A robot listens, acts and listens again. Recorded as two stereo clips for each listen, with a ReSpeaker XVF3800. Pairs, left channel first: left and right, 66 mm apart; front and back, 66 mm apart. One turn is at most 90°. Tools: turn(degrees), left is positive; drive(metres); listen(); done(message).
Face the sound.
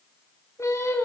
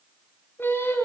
turn(degrees=50)
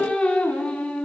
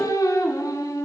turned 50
turn(degrees=15)
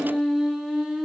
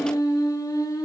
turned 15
done("Facing the singing, over 4 m away.")